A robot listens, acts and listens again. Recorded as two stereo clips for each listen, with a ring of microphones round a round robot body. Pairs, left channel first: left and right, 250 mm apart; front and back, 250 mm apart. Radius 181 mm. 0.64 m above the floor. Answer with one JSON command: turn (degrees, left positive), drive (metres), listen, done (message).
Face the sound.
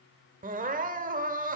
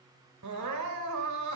{"turn": -150}
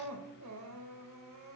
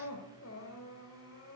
{"turn": -55}
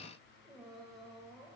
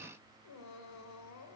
{"done": "Found it: crying, straight ahead."}